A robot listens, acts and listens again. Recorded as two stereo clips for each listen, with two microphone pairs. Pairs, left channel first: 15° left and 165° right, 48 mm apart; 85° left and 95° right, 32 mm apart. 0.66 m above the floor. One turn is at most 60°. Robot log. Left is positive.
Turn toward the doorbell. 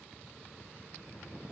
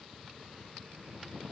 cmd idle
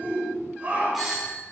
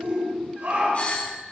note: The doorbell: 110° left.
cmd yaw +60
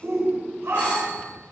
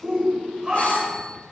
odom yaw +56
note: Nothing new. It was at 55° left.
cmd yaw +55
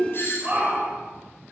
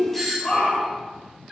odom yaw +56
end: Facing the doorbell, 2 to 4 m away.